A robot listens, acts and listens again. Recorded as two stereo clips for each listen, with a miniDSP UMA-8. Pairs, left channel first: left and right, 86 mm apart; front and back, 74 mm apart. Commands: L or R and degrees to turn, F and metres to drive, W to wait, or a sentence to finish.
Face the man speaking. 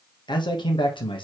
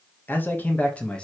L75
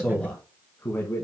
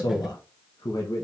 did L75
L30
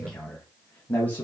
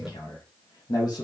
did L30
L20
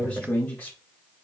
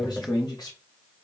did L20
L15
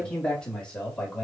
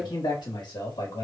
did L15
L10
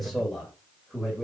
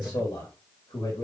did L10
Found it: a man speaking, straight ahead, 2 to 4 m away.